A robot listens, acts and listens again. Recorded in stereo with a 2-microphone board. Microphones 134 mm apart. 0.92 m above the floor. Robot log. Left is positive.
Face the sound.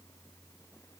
cmd idle
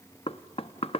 note: The knocking: about 45° left or 135° left.
cmd yaw +45
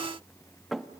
end: Found it: knocking, straight ahead.